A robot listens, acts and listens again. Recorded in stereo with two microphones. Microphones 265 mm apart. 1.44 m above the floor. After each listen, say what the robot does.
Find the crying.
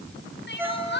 Turn 45° left.
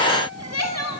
Turn 90° left.
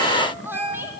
Turn 10° right.
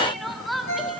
Found it: crying, straight ahead, 2 to 4 m away.